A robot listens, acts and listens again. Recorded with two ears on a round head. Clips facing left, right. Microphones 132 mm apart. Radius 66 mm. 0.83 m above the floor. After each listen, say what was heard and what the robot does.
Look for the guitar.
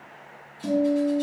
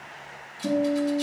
The guitar: about 50° left or 130° left. Turn 50° left.
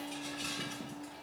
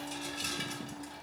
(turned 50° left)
Keep listening.
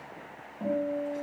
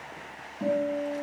Facing the guitar, 2 to 4 m away.